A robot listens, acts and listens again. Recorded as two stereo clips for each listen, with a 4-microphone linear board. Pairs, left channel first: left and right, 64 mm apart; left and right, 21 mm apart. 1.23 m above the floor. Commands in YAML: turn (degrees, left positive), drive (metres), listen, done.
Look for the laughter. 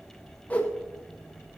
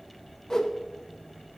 listen: true
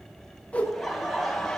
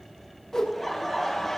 turn: 30
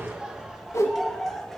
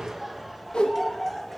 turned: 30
turn: 30
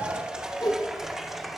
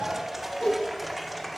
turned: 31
turn: -30
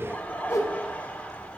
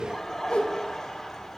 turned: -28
turn: 25
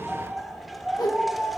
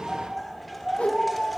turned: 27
done: "Facing the laughter."